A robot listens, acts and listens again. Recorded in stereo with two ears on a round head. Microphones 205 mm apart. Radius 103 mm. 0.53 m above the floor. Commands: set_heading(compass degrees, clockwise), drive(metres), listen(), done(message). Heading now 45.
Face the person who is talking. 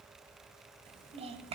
set_heading(70)
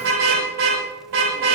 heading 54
listen()
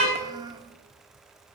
set_heading(69)
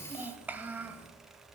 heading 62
done("Facing the child speaking.")